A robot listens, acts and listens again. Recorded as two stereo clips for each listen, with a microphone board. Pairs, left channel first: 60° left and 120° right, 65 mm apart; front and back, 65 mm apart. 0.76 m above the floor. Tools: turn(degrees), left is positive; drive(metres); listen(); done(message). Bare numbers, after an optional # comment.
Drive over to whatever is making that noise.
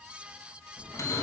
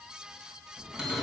# The bell: 100° left.
turn(100)
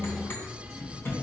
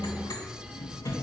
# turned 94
drive(1.0)
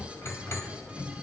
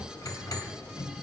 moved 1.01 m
# The bell is now 15° left.
turn(15)
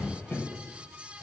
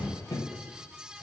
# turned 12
drive(1.0)
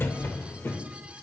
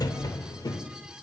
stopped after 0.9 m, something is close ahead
done("Arrived at the bell, straight ahead.")